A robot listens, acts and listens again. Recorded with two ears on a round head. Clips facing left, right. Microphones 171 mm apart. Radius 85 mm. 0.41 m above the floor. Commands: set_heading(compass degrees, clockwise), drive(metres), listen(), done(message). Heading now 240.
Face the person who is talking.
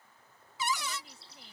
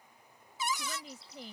set_heading(300)
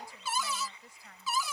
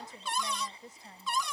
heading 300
set_heading(325)
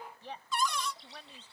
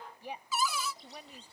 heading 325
set_heading(340)
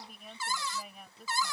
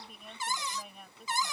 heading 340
done("Facing the woman speaking.")